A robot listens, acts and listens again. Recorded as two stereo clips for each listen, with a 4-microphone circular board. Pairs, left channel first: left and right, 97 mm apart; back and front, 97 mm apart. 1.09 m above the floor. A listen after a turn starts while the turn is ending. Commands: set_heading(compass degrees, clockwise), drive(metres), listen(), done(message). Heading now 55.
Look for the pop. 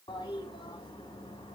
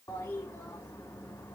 listen()
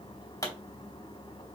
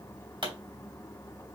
set_heading(20)
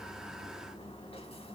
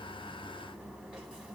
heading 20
done("I heard a pop from this way, but can't make it out now.")